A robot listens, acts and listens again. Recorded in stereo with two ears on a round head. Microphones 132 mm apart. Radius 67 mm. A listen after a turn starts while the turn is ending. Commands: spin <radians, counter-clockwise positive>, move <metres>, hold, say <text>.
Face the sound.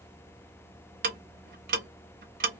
spin -1.05
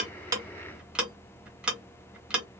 say Found it: ticking, straight ahead.